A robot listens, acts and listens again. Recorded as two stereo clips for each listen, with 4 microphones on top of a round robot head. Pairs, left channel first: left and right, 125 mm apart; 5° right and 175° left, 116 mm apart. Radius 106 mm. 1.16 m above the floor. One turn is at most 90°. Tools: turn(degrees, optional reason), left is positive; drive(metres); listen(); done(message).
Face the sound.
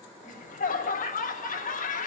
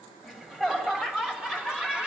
turn(degrees=90, reason="The laughter: 95° left.")
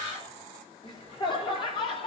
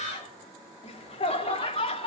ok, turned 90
turn(degrees=35, reason="The laughter is now 35° left.")
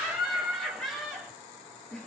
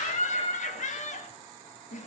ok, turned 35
done("Facing the laughter.")